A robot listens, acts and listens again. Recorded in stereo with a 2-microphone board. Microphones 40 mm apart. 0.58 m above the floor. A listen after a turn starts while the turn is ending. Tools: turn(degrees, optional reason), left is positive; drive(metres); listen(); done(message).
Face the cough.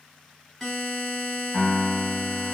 listen()
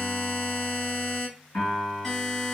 listen()
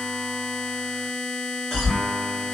turn(degrees=20, reason="The cough: about 20° left or 160° left.")
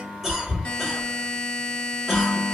done("Found it: a cough, straight ahead.")